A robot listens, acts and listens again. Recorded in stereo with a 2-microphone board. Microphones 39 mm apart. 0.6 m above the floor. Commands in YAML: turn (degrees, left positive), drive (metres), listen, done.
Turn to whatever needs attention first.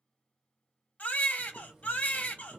turn: 40
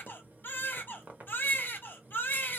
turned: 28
turn: 105
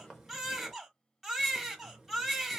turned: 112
done: "Found it: a baby crying, straight ahead, 1 to 2 m away."